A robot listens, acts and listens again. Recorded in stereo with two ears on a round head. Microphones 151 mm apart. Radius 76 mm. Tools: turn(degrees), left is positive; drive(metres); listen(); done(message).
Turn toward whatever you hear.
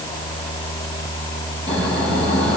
listen()
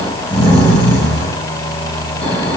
turn(degrees=30)
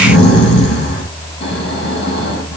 turn(degrees=140)
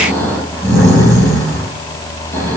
turn(degrees=15)
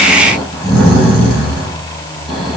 done("Found it: snoring, straight ahead, over 4 m away.")